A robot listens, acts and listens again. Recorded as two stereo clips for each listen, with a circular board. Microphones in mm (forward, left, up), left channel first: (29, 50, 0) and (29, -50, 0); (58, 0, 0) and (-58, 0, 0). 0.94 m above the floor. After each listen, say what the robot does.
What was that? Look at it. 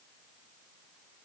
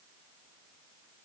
Keep listening.
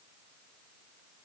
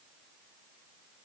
Keep listening.
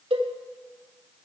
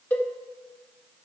Turn 75° right.
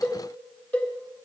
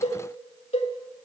Turn 15° left.
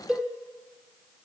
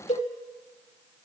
Facing the cowbell.